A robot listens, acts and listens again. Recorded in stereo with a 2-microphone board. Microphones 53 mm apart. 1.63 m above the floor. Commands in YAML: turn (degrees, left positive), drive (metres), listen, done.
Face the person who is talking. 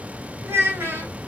turn: -50
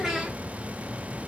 turn: -10
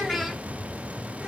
done: "Facing the child speaking, 1 to 2 m away."